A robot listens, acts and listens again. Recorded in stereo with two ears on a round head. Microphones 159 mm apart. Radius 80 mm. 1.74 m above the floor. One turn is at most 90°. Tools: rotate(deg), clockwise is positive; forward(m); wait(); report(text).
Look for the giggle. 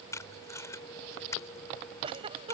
rotate(30)
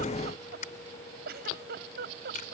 rotate(90)
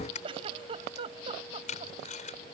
rotate(30)
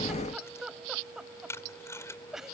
report("Found it: a giggle, straight ahead.")